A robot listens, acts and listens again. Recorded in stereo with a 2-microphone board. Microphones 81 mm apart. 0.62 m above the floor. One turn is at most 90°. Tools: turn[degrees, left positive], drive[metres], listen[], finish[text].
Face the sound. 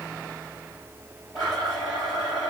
Thought: The blender: about 55° left or 125° left.
Action: turn[55]
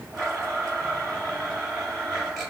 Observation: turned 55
Action: finish[Facing the blender.]